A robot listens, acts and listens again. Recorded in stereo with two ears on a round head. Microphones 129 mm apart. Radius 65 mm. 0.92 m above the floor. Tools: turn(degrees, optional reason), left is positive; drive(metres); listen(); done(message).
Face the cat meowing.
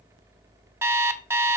listen()
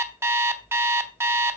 listen()
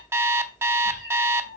turn(degrees=90)
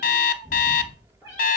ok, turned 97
turn(degrees=-10, reason="So it is at 10° right.")
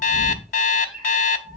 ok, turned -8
done("Facing the cat meowing.")